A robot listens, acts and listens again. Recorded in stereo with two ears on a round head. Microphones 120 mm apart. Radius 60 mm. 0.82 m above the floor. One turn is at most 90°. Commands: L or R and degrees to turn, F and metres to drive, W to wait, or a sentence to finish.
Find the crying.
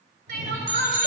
R90
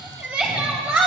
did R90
R10
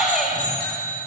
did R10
Facing the crying.